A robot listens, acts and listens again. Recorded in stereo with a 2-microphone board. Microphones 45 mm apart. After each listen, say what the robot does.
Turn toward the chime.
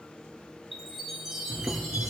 Turn 30° right.
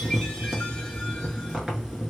Keep listening.
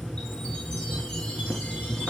Keep listening.
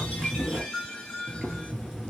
Turn 20° left.
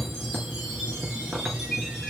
Found it: a chime, straight ahead.